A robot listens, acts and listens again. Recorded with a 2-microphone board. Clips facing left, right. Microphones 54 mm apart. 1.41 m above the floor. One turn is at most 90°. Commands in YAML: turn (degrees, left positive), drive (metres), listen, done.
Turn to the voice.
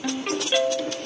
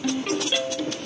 listen: true
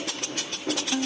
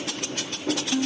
listen: true
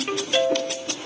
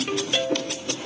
done: "I can't make out anyone speaking to turn to."